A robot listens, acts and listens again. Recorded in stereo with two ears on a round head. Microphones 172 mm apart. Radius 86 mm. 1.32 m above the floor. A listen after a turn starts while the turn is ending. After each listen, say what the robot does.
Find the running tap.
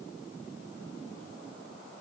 Keep listening.
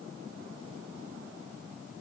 Keep listening.
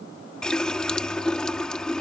Turn 30° left.
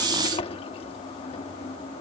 Turn 150° left.
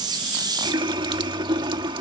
Turn 25° right.
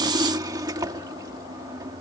Turn 20° right.
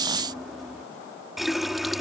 Facing the running tap.